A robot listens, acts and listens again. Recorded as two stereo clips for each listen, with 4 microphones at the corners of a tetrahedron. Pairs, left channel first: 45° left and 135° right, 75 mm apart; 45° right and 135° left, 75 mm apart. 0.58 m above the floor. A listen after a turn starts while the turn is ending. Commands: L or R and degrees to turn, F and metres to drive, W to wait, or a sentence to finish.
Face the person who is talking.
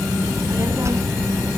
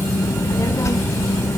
R90
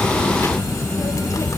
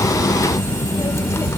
W
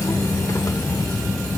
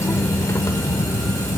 W
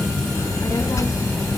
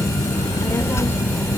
Facing the child speaking.